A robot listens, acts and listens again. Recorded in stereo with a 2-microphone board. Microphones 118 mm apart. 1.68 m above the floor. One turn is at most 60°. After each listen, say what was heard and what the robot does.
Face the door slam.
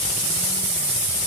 Keep listening.
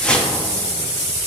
Keep listening.
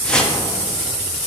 I can't make out a door slam to turn to.